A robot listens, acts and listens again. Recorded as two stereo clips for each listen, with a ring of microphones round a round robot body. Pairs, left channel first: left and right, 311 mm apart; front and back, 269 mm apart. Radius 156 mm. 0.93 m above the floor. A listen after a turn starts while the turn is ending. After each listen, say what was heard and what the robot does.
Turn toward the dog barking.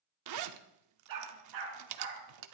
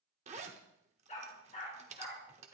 The dog barking: 65° right. Turn 65° right.
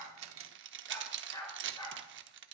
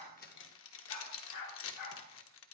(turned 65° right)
The dog barking is now 10° left. Turn 10° left.
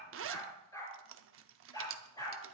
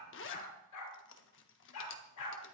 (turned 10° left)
The dog barking is now 10° left. Turn 10° left.
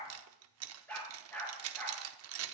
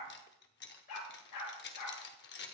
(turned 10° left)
Facing the dog barking.